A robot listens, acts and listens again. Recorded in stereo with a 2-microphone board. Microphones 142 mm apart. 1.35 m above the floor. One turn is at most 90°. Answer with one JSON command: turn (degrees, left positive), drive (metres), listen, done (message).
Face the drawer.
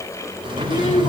{"turn": -35}
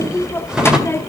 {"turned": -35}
{"done": "Facing the drawer, 1 to 2 m away."}